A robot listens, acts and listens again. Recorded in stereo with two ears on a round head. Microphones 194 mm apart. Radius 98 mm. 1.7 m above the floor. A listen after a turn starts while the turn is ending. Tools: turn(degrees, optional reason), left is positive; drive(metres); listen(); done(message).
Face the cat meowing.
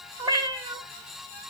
turn(degrees=-15, reason="The cat meowing: about 15° right or 165° right.")
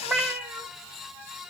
done("Found it: a cat meowing, straight ahead, 2 to 4 m away.")